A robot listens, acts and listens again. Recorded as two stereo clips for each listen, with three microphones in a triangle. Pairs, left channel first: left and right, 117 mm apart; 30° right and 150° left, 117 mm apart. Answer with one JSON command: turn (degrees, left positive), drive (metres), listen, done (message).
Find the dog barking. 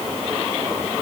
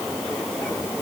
{"listen": true}
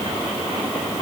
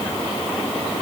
{"listen": true}
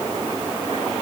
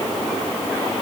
{"done": "I can't make out a dog barking to turn to."}